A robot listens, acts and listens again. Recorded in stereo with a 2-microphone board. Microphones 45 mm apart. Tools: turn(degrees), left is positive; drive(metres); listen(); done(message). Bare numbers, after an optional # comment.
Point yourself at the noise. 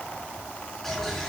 turn(30)
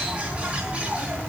# So it is at 25° right.
turn(-25)
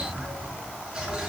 # The bird is now 15° right.
turn(-15)
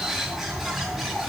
done("Facing the bird, over 4 m away.")